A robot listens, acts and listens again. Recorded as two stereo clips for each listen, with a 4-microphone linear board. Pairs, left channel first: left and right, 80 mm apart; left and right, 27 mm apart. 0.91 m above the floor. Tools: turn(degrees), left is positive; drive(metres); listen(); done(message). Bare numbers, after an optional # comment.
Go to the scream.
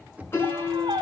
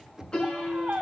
turn(-90)
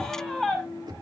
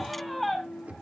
drive(1.0)
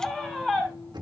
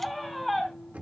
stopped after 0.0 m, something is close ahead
done("Something is in my way. I am facing the scream but have not reached it.")